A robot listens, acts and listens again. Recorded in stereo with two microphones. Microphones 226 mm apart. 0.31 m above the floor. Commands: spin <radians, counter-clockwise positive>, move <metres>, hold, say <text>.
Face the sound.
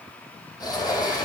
spin 0.35
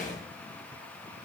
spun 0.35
spin 2.53
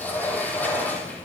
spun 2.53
spin 0.17
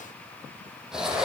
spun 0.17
say Found it: a sliding door, straight ahead, 2 to 4 m away.